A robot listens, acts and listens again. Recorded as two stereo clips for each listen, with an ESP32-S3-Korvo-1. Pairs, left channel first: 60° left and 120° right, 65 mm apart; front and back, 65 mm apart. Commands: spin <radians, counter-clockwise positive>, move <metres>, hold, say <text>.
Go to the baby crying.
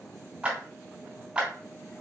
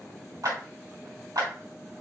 hold
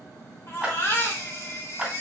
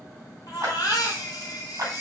spin 0.35
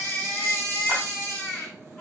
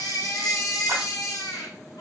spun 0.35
move 1.0
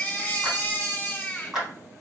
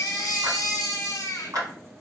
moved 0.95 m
move 1.0
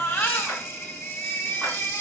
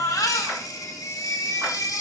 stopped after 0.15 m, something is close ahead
spin 0.17
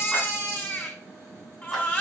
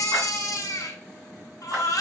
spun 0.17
say I am next to the baby crying.